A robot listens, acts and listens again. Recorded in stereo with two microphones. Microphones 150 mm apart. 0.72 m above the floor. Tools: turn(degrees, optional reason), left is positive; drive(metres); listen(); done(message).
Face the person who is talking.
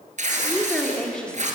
turn(degrees=30)
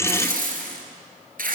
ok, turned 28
listen()
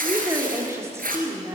turn(degrees=-20, reason="So it is at 20° right.")
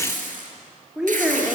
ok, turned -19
done("Facing the woman speaking.")